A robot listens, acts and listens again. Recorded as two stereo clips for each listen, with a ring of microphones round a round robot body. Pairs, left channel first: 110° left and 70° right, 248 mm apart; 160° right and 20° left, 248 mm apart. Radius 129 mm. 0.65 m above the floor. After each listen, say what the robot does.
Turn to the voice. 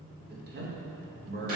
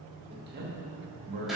Turn 20° right.
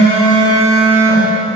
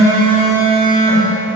Keep listening.
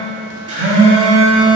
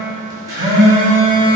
Keep listening.
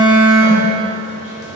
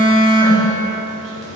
Facing where the man speaking came from. I can't hear it now.